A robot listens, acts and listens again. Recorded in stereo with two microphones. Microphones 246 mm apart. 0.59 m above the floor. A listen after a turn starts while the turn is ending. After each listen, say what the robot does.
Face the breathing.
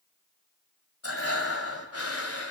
Turn 70° left.
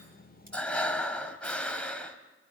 Facing the breathing, 1 to 2 m away.